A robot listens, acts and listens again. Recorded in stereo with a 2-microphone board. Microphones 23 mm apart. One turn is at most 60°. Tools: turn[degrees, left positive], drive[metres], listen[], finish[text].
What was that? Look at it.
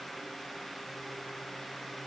Action: listen[]
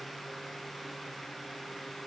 Action: listen[]
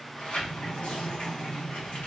Thought: The sliding door: about 60° left or 120° left.
Action: turn[60]
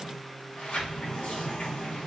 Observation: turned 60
Thought: So it is at 60° left.
Action: turn[60]
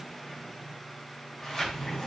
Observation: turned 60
Thought: The sliding door is now 20° left.
Action: turn[20]
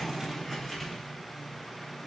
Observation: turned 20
Action: finish[Found it: a sliding door, straight ahead, under 1 m away.]